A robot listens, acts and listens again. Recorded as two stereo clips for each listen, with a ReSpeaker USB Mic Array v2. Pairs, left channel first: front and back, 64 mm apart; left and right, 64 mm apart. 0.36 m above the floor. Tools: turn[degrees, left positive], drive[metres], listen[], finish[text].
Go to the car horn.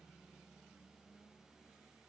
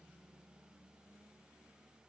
Action: listen[]
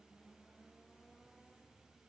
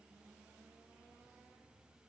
Action: listen[]
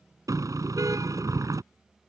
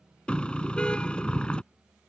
Thought: The car horn: 165° left.
Action: turn[165]
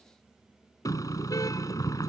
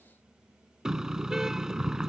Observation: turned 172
Thought: The car horn is now 10° right.
Action: turn[-10]
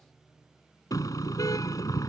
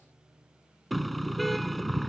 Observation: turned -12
Action: drive[1.0]
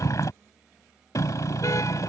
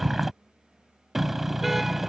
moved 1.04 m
Action: drive[1.0]
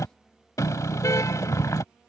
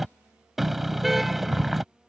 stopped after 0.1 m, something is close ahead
Action: finish[I am next to the car horn.]